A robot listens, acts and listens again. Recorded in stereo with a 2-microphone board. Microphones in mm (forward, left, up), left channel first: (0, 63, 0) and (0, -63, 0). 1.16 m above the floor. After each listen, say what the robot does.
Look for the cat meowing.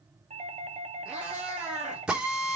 Turn 30° right.
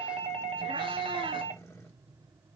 Keep listening.
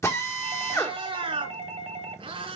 Turn 130° right.
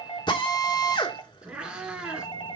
Turn 10° right.
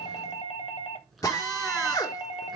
Keep listening.
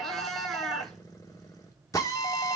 Found it: a cat meowing, straight ahead.